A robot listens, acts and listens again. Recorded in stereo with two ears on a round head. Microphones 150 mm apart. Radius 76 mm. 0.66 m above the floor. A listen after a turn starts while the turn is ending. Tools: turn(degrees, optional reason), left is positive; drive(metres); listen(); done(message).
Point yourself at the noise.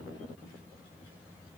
listen()
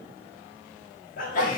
turn(degrees=55, reason="The sneeze: about 55° left or 125° left.")
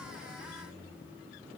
listen()
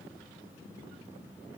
done("I heard a sneeze, but can't make it out now. It was about straight ahead or 70° left.")